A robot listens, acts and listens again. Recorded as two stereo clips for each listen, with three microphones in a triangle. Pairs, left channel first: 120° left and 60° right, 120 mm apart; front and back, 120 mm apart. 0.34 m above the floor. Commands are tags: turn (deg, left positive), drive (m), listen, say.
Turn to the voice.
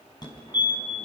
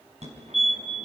<listen/>
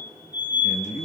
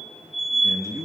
<turn deg="120"/>
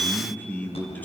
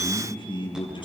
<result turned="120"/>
<turn deg="45"/>
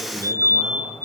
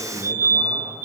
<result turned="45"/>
<listen/>
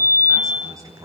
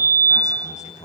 <say>Facing the man speaking, over 4 m away.</say>